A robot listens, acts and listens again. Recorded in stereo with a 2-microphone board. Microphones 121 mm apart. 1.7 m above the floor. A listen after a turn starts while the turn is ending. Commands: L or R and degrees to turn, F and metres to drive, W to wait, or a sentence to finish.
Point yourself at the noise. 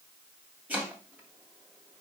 R30
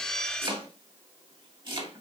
R135
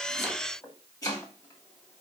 L30
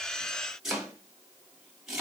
Found it: chopping, straight ahead.